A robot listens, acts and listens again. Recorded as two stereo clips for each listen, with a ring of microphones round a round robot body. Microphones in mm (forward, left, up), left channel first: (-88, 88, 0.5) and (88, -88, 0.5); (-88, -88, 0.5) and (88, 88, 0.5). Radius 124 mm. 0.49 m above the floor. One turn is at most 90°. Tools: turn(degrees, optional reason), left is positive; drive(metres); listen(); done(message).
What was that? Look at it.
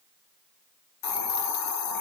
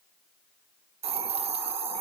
turn(degrees=90, reason="The hiss: 110° left.")
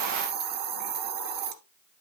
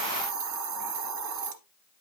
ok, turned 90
done("Facing the hiss, 1 to 2 m away.")